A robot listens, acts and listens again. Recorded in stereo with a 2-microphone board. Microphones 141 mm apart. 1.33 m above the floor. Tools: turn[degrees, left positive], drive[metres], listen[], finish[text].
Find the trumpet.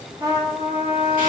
Thought: The trumpet: about 30° right or 150° right.
Action: turn[-30]
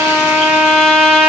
Action: finish[Facing the trumpet.]